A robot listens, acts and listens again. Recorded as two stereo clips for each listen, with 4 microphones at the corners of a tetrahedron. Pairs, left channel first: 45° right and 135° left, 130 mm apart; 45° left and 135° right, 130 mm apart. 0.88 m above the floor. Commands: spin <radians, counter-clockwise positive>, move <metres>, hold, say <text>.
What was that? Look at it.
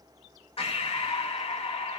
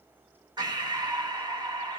spin -1.48
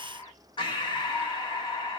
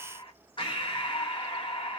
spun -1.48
say Found it: breathing, straight ahead.